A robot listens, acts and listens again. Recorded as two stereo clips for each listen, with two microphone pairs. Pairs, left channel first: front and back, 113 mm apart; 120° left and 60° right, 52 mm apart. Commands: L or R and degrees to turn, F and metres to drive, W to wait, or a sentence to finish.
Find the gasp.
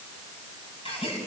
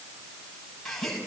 L30
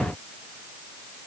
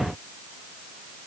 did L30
I heard a gasp from this way, but can't make it out now.